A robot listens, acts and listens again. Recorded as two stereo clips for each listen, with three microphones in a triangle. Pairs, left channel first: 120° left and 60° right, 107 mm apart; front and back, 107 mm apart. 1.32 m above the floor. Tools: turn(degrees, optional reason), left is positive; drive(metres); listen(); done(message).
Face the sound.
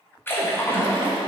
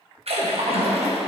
turn(degrees=-175, reason="The splash: 175° right.")
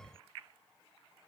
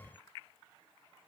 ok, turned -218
turn(degrees=45, reason="Nothing new. It was at 45° left.")
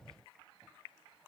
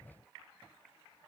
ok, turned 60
turn(degrees=-15, reason="Nothing new. It was at 15° right.")
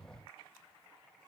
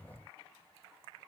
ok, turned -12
done("Facing where the splash came from. I can't hear it now.")